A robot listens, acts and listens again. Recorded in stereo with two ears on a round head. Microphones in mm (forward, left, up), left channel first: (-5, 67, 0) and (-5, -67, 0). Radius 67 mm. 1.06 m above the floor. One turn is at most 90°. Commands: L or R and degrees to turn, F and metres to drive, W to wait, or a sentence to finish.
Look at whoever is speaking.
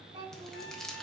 R35
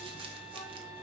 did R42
W
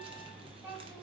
R15
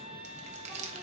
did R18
W
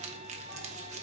W
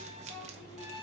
R15
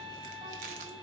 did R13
W
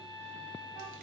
W
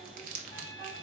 Facing where the child speaking came from. I can't hear it now.